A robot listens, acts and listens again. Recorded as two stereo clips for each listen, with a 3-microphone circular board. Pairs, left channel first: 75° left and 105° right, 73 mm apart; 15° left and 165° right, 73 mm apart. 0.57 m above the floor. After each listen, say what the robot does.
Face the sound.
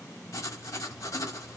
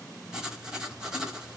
Turn 115° left.
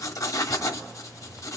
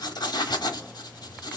Turn 35° left.
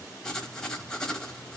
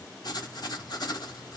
Found it: writing, straight ahead.